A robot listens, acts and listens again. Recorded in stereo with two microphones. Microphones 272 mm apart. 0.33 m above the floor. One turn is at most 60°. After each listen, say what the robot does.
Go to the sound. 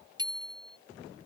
Turn 30° right.
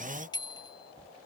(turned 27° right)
Turn 15° left.
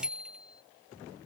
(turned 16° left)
Drive 1.0 m forward.
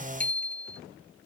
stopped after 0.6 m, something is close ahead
Blocked. The bicycle bell is further on, straight ahead.